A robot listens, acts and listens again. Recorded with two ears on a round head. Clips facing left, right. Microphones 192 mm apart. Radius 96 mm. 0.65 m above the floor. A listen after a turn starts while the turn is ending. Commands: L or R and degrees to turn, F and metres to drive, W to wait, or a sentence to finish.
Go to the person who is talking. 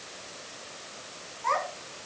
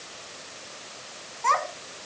R65
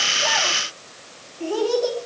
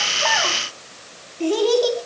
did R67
R50
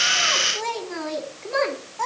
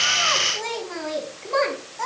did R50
F1.0
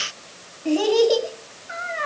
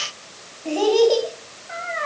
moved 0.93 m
L10
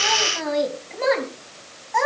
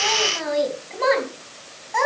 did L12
F1.0
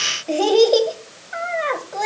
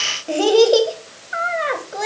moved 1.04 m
F1.0
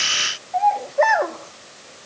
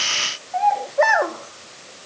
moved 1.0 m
F1.0
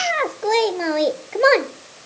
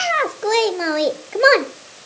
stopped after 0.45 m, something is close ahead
I am next to the child speaking.